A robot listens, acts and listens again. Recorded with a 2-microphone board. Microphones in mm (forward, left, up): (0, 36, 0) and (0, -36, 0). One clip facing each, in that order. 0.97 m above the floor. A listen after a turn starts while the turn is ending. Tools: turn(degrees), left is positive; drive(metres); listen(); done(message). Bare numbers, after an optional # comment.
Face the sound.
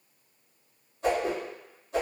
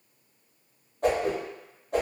# The whoosh: about 60° right or 120° right.
turn(-60)
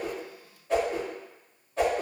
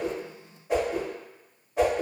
# So it is at 15° right.
turn(-15)
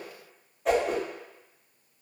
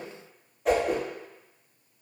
done("Facing the whoosh.")